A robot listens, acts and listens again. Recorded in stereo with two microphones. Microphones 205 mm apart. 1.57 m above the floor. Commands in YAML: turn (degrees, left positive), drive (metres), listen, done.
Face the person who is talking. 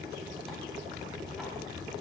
listen: true
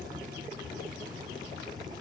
listen: true
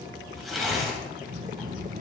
turn: -45
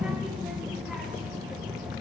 done: "Facing the child speaking, under 1 m away."